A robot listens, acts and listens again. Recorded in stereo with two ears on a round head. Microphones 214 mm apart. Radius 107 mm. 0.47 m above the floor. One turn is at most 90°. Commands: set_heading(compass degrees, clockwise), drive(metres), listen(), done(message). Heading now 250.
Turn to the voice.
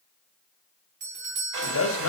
set_heading(190)
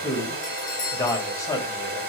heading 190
set_heading(175)
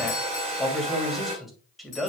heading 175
done("Found it: a man speaking, straight ahead.")